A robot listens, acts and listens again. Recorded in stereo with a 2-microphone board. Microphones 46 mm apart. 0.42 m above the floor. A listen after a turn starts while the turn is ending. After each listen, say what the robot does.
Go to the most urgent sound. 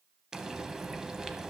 Keep listening.
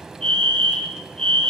Turn 30° left.
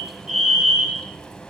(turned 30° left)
Turn 15° right.
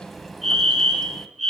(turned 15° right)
Drive 1.0 m forward.
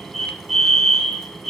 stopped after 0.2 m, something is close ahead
Something is in my way. I am facing the fire alarm but have not reached it.